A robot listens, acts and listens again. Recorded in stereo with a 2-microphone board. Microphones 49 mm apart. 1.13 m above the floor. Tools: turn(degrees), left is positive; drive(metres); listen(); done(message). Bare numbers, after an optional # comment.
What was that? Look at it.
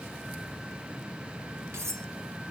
turn(-90)
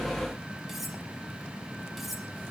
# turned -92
done("Facing the cutlery clinking, 2 to 4 m away.")